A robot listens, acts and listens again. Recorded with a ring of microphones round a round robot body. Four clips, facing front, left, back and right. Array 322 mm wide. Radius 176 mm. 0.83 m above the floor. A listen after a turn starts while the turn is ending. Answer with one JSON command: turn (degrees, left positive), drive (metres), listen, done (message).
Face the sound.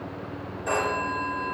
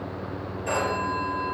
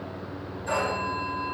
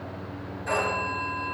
{"turn": 15}
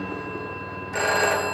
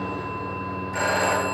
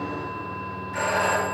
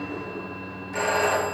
{"done": "Facing the phone ringing."}